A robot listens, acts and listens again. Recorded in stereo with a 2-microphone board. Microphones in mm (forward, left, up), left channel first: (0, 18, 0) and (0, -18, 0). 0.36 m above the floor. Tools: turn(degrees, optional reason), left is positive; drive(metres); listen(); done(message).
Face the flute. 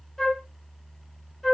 turn(degrees=30)
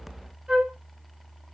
turn(degrees=-30, reason="So it is at 30° right.")
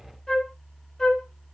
turn(degrees=10, reason="The flute is now 10° left.")
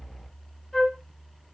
done("Found it: a flute, straight ahead.")